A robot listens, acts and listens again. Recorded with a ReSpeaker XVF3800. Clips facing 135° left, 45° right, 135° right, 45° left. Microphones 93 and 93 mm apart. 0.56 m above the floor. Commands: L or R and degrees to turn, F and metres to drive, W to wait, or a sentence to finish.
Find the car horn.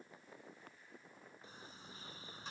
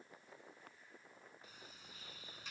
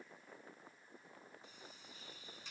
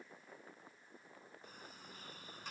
W
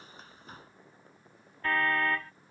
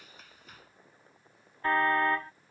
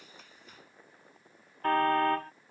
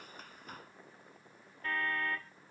R110
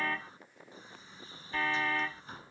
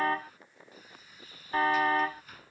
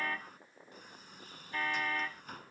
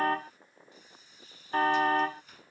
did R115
Found it: a car horn, straight ahead.